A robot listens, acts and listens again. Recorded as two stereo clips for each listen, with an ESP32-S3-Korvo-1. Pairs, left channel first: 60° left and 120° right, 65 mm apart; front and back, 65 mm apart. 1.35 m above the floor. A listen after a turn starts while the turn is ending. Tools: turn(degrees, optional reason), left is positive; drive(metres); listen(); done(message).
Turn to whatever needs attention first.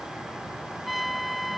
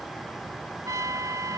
listen()
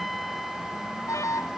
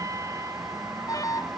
turn(degrees=25, reason="The alarm: 25° left.")
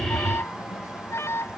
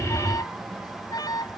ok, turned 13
turn(degrees=10, reason="The alarm is now 10° left.")
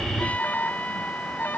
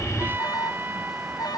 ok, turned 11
done("Found it: an alarm, straight ahead.")